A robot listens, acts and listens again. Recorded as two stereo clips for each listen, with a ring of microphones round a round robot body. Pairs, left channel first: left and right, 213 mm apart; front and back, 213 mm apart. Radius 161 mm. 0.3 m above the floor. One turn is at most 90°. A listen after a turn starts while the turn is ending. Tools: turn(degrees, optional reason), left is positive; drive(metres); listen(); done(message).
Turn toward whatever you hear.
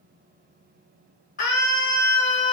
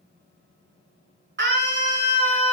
turn(degrees=90, reason="The scream: 150° left.")
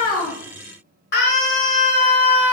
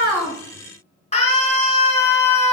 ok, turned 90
turn(degrees=60, reason="The scream is now 60° left.")
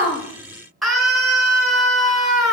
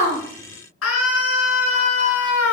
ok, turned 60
done("Found it: a scream, straight ahead.")